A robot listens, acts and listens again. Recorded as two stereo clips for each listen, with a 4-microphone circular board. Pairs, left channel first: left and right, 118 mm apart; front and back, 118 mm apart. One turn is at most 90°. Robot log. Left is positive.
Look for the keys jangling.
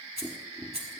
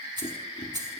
note: The keys jangling: 125° right.
cmd yaw -90
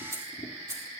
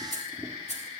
note: The keys jangling is now 25° right.
cmd yaw -25
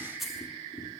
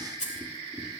end: Facing the keys jangling.